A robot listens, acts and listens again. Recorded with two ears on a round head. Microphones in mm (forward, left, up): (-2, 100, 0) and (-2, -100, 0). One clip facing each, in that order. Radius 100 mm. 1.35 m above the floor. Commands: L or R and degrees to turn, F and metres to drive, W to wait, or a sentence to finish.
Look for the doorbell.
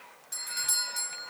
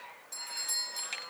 L15
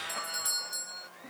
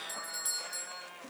Found it: a doorbell, straight ahead.